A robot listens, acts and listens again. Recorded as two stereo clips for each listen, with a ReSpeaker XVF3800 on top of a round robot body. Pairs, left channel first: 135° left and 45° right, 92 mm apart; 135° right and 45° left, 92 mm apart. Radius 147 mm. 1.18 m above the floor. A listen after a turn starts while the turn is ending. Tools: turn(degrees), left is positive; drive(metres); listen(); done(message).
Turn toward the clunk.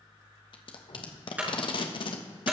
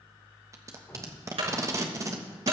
turn(degrees=30)
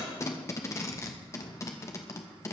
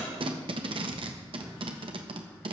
done("Facing where the clunk came from. I can't hear it now.")